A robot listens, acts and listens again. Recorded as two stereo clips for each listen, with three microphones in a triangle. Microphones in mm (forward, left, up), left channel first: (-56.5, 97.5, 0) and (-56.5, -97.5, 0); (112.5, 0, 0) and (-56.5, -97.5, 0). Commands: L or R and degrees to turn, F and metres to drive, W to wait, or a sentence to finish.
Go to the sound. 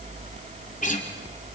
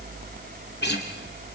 L45
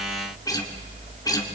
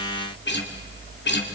L20
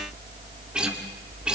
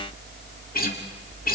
F1.0
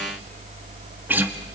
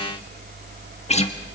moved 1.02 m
R15
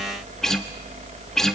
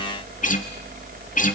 F1.0
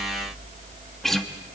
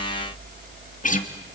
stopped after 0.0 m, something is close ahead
I am next to the guitar.